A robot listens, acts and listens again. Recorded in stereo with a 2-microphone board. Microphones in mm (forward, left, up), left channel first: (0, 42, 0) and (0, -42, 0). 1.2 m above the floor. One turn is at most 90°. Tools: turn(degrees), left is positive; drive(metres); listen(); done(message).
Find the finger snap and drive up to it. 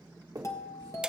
turn(degrees=-50)
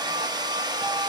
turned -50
listen()
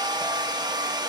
listen()
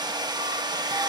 done("I heard a finger snap, but can't make it out now. It was about straight ahead or 80° right. I did not reach it.")